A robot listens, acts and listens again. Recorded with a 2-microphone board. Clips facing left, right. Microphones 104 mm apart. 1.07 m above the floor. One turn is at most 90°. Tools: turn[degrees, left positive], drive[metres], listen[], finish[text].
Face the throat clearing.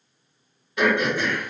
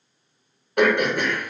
Thought: The throat clearing: about 55° right or 125° right.
Action: turn[-55]
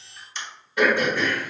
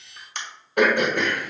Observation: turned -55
Thought: So it is at 65° right.
Action: turn[-65]
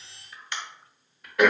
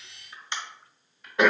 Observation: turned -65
Thought: The throat clearing is now 25° right.
Action: turn[-25]
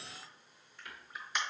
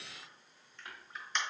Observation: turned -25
Action: finish[Found it: throat clearing, straight ahead, 1 to 2 m away.]